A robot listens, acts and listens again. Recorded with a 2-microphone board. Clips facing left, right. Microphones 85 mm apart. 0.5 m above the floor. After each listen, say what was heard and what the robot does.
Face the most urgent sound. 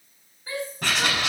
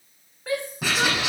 The shout: about 70° right or 110° right. Turn 70° right.
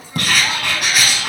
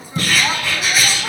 Keep listening.
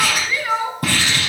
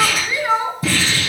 So it is at 15° right. Turn 15° right.
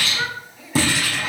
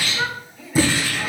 Facing the shout.